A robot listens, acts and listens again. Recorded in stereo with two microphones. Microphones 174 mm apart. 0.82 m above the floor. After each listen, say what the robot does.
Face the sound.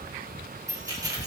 Turn 20° right.
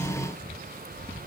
Keep listening.
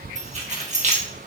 Turn 135° right.
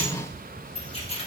Turn 35° left.
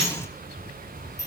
Turn 15° left.
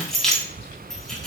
Found it: keys jangling, straight ahead.